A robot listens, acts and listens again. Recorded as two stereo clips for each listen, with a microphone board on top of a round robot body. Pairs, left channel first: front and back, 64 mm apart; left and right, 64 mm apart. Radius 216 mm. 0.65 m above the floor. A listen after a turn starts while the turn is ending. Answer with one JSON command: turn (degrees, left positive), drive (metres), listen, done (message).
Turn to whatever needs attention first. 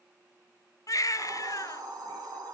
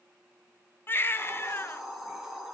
{"turn": 35}
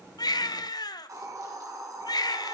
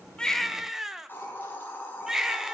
{"done": "Found it: a baby crying, straight ahead, 1 to 2 m away."}